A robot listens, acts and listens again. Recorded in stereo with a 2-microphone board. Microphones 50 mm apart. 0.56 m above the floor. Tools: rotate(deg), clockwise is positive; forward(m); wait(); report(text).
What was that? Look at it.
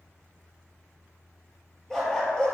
rotate(-30)
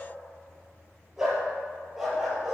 report("Facing the dog barking, 2 to 4 m away.")